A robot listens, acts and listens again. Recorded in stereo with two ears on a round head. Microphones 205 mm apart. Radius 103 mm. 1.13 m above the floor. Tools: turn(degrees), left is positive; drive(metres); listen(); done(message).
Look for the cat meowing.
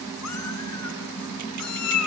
turn(degrees=90)
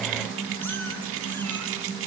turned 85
listen()
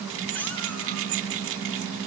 listen()
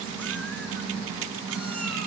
done("Facing where the cat meowing came from. I can't hear it now.")